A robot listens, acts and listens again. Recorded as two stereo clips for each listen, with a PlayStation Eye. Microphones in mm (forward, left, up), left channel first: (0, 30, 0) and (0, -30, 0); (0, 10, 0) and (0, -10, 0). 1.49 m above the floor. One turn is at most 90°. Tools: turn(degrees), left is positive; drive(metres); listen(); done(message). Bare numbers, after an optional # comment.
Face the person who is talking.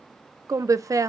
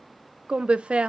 # The woman speaking: about 70° right or 110° right.
turn(-70)
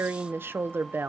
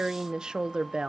# So it is at 40° right.
turn(-40)
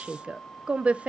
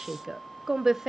# The woman speaking is now 25° right.
turn(-25)
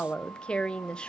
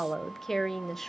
# The woman speaking is now 15° left.
turn(15)
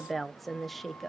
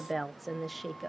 done("Facing the woman speaking, under 1 m away.")